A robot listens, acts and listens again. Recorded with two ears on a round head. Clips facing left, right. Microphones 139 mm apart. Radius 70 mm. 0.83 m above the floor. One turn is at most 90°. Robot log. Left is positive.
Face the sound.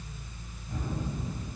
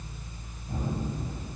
note: The gunshot: about 20° right or 160° right.
cmd yaw -20
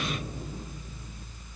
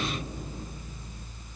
cmd idle
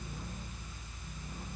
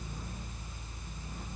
end: I heard a gunshot, but can't make it out now. It was about straight ahead or 140° right.